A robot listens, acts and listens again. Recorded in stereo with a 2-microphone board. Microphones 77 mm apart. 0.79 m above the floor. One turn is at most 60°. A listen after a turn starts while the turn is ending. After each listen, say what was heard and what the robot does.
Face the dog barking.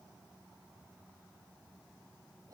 Keep listening.
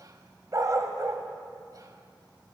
The dog barking: about 40° right or 140° right. Turn 40° right.
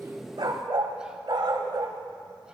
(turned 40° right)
So it is at 90° right. Turn 60° right.
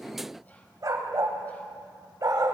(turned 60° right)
The dog barking is now 55° right. Turn 55° right.
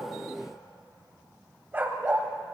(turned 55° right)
The dog barking is now 25° right. Turn 25° right.
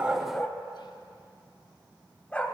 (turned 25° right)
The dog barking is now 20° left. Turn 20° left.
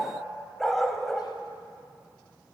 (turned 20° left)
Found it: a dog barking, straight ahead, 1 to 2 m away.